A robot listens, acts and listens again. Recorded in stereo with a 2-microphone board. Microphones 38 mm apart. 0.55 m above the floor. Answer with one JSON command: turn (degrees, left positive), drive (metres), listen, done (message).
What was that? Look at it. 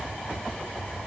{"listen": true}
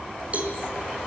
{"turn": -40}
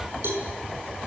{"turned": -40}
{"turn": -100}
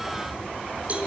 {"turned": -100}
{"turn": -35}
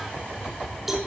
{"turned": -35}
{"done": "Facing the cowbell, over 4 m away."}